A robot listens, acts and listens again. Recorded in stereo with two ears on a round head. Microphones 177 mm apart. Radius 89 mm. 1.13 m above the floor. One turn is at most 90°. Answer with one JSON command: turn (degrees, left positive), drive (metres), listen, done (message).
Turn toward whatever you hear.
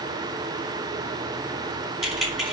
{"turn": 30}
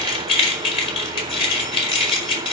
{"turn": 90}
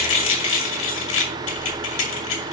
{"turn": 70}
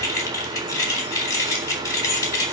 {"turn": 15}
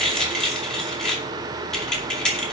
{"done": "Found it: keys jangling, straight ahead, 2 to 4 m away."}